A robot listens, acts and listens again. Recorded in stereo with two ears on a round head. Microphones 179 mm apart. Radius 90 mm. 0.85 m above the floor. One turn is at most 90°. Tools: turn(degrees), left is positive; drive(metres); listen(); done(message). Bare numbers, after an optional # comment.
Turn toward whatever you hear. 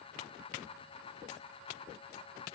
listen()
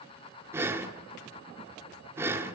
turn(-30)
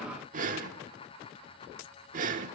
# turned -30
# So it is at 140° right.
turn(-90)
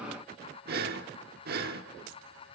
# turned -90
# The breathing is now 50° right.
turn(-50)
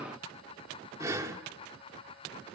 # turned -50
# The breathing is now 15° right.
turn(-15)
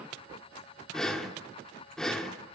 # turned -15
done("Found it: breathing, straight ahead.")